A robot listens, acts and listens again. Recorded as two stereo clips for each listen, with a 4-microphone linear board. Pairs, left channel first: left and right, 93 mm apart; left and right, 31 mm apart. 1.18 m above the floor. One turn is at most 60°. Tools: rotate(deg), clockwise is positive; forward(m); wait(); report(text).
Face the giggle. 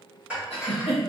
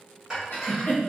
rotate(-60)
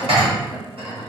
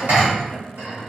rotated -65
wait()
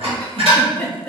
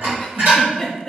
rotate(-15)
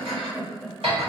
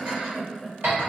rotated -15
report("Facing the giggle, 1 to 2 m away.")